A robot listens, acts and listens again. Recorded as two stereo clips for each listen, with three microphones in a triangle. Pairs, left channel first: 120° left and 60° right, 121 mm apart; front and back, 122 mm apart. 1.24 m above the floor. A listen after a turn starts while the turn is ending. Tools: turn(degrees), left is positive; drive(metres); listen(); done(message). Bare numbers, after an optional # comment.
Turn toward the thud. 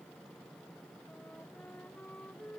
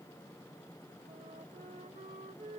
listen()
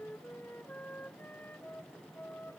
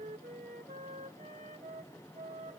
listen()
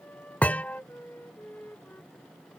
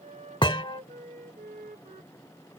# The thud: 40° left.
turn(40)
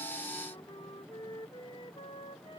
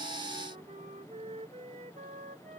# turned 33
# Nothing new. It was at 10° left.
turn(10)
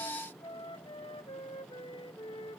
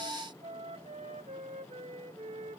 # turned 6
done("I heard a thud from this way, but can't make it out now.")